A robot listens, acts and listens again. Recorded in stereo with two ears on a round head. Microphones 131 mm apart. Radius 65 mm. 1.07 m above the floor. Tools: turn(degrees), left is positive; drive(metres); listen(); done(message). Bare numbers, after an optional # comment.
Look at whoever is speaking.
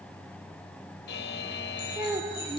# The child speaking: about 20° right or 160° right.
turn(-20)
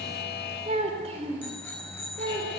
# So it is at 135° right.
turn(-135)
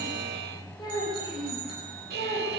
# The child speaking is now 30° left.
turn(30)
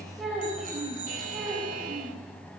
done("Facing the child speaking, over 4 m away.")